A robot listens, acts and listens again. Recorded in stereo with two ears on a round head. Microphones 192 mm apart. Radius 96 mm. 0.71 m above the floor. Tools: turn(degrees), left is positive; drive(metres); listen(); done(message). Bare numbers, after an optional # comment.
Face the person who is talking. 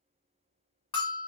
listen()
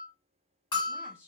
turn(-30)
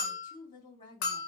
# So it is at 25° left.
turn(25)
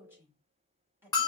# The woman speaking is now 10° right.
turn(-10)
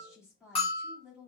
done("Facing the woman speaking.")